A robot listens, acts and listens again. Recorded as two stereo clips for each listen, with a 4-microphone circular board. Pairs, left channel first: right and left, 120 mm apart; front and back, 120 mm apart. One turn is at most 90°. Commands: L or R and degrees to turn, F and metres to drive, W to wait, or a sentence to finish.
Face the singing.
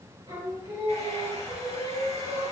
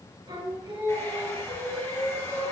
L90
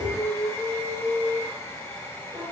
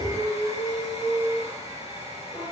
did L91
L35
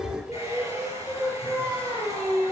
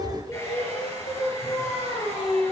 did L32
Found it: singing, straight ahead.